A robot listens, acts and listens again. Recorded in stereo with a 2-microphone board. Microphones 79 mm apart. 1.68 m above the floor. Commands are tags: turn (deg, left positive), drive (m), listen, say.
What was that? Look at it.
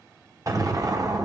<turn deg="-45"/>
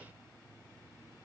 <listen/>
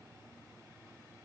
<say>I heard an explosion, but can't make it out now. It was about straight ahead or 90° right.</say>